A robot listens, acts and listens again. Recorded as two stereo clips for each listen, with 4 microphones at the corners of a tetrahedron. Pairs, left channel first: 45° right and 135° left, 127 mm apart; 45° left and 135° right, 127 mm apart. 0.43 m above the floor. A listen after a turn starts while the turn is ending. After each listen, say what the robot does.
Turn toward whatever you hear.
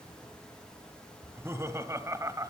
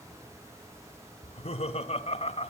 Turn 75° left.
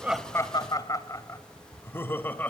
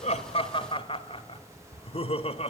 Turn 30° left.
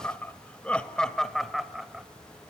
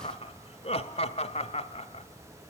Turn 50° left.
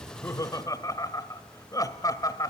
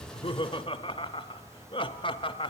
Turn 10° left.
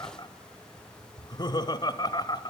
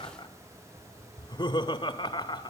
Found it: laughter, straight ahead.